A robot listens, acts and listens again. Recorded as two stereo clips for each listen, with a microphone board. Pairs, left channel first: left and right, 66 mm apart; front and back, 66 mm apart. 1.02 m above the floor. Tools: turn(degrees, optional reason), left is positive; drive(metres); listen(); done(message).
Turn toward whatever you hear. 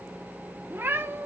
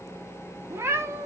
turn(degrees=-135, reason="The cat meowing: 135° right.")
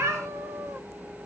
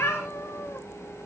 turn(degrees=-50, reason="The cat meowing is now 50° right.")
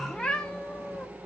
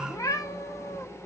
turn(degrees=15, reason="The cat meowing is now 15° left.")
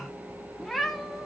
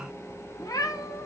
done("Found it: a cat meowing, straight ahead.")